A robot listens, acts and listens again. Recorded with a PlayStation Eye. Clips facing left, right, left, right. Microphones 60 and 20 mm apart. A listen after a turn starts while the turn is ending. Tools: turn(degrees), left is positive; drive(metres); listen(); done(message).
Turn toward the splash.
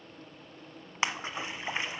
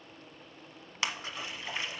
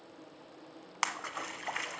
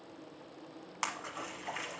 turn(degrees=30)
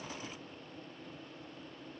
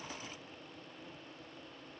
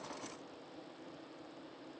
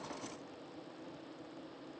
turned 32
listen()
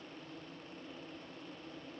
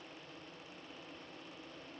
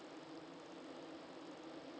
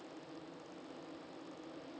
done("I heard a splash, but can't make it out now. It was about 5° right or 120° left.")